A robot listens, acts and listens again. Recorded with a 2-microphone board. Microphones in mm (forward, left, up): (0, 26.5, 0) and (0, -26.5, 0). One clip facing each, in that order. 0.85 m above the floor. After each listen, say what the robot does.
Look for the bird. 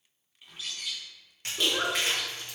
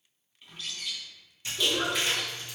Turn 30° left.
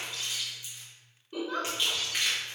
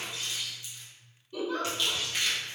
Turn 25° right.
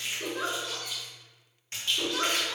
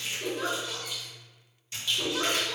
Found it: a bird, straight ahead.